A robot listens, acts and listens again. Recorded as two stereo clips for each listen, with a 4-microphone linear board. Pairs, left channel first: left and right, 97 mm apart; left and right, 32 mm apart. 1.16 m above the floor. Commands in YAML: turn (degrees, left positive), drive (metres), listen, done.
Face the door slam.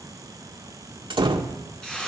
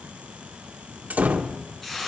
turn: -65
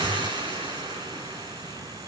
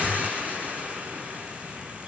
listen: true
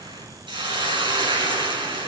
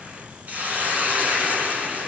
done: "I heard a door slam, but can't make it out now. It was about straight ahead or 50° right."